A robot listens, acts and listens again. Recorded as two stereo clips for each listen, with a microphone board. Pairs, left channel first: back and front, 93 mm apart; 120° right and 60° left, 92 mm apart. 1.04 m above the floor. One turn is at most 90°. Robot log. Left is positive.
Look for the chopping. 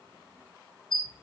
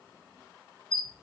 cmd idle
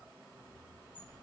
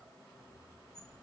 cmd idle
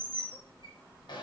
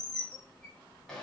end: I can't make out chopping to turn to.